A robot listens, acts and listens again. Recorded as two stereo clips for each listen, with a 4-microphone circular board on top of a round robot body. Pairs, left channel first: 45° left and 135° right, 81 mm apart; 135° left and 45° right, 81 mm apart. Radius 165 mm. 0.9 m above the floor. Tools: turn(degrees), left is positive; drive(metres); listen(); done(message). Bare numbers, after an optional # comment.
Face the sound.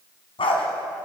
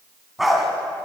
# The dog barking: 45° left.
turn(45)
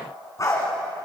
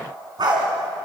done("Facing the dog barking.")